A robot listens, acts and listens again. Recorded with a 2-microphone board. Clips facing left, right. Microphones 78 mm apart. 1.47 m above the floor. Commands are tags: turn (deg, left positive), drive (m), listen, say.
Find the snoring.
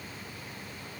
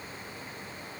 <listen/>
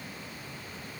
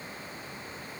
<listen/>
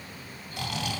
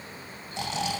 <turn deg="-25"/>
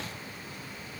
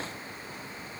<listen/>
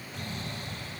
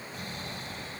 <say>Found it: snoring, straight ahead.</say>